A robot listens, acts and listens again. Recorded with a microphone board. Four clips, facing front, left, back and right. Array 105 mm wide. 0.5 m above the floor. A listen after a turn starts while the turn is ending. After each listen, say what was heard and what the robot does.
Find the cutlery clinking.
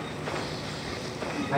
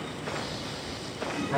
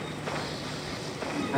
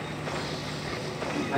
Keep listening.
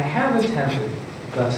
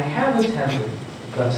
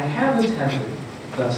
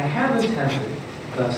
Keep listening.
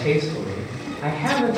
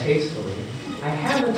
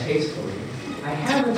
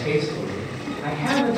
I can't make out cutlery clinking, only a man speaking.